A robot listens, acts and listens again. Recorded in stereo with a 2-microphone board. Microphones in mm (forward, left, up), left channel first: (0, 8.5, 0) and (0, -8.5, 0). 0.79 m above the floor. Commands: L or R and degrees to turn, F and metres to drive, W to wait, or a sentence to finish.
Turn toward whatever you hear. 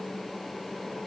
W
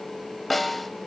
L30
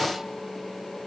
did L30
W
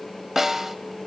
R20
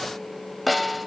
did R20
Facing the snare drum, 1 to 2 m away.